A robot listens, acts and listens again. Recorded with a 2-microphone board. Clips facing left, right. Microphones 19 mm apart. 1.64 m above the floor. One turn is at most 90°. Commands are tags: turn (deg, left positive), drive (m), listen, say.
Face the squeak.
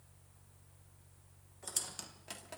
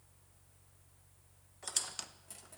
<turn deg="-20"/>
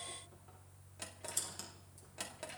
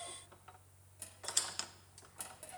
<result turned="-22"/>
<turn deg="-90"/>
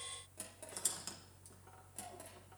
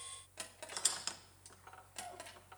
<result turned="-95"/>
<turn deg="-40"/>
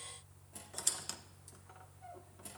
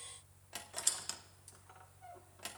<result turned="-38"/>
<say>Found it: a squeak, straight ahead, 1 to 2 m away.</say>